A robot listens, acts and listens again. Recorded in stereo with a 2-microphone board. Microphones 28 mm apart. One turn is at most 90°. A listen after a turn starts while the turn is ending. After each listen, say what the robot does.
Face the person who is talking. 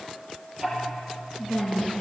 Turn 45° left.
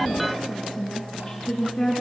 Facing the woman speaking.